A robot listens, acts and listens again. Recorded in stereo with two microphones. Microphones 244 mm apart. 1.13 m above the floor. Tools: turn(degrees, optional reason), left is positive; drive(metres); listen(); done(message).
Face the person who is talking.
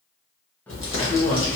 turn(degrees=65, reason="The man speaking: about 65° left or 115° left.")
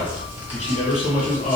turn(degrees=35, reason="So it is at 35° left.")
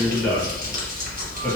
done("Facing the man speaking.")